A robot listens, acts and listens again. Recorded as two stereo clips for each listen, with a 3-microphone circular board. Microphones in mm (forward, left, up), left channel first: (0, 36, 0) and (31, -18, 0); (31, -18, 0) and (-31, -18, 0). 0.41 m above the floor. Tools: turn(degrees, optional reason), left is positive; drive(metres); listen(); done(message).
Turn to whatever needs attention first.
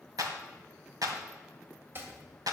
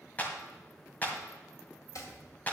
listen()
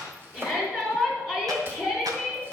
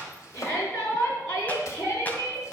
turn(degrees=25, reason="The shout: 25° left.")
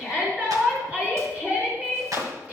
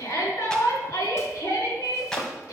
done("Facing the shout, over 4 m away.")